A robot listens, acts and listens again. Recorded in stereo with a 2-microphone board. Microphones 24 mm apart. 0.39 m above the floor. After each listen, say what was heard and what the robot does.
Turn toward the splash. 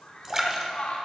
The splash: about 25° right or 155° right. Turn 25° right.
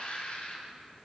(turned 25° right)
Keep listening.
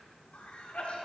I heard a splash, but can't make it out now. It was about straight ahead or 130° right.